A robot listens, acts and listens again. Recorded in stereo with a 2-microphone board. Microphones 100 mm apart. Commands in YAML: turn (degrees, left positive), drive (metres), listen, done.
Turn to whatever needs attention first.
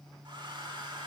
listen: true
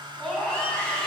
turn: 30
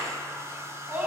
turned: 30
turn: -20
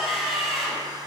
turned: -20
done: "Found it: a scream, straight ahead, over 4 m away."